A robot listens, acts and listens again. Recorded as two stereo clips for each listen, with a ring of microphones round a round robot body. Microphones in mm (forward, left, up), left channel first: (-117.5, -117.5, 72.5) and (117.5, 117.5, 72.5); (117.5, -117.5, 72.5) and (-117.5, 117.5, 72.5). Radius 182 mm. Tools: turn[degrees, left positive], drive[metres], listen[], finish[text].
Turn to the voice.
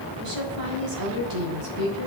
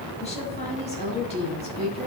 Thought: The woman speaking: 25° left.
Action: turn[25]
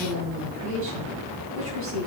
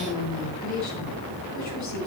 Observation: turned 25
Action: finish[Found it: a woman speaking, straight ahead, 2 to 4 m away.]